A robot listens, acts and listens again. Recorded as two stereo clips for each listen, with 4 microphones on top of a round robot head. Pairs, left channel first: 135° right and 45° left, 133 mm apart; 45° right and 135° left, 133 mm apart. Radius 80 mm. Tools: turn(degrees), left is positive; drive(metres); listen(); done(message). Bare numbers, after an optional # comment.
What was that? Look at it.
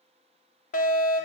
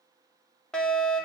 # The fire alarm: 130° right.
turn(-130)
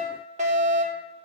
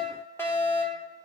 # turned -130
# The fire alarm is now 25° left.
turn(25)
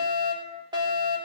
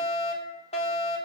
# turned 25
# The fire alarm is now 10° right.
turn(-10)
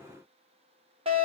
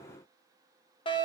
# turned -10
done("Facing the fire alarm.")